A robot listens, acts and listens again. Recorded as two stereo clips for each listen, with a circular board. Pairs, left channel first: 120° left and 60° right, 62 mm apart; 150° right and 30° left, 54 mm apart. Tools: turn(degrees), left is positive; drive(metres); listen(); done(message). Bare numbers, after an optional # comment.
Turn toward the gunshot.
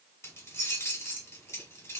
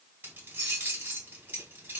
listen()
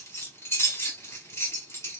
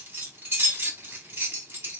listen()
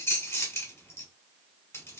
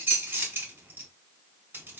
done("I can't make out a gunshot to turn to.")